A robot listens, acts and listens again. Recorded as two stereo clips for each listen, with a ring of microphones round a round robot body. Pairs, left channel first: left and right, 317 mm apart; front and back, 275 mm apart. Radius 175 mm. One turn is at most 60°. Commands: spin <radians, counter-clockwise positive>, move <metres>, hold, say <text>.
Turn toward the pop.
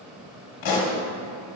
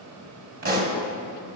spin 1.05
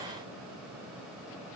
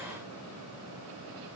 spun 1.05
spin 1.05
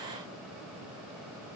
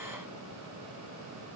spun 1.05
say Facing where the pop came from. I can't hear it now.